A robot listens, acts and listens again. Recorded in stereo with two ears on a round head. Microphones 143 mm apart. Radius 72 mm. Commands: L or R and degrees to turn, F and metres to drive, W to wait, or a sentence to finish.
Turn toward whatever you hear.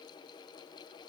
W
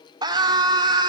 R25
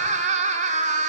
R125
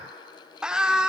Facing the scream.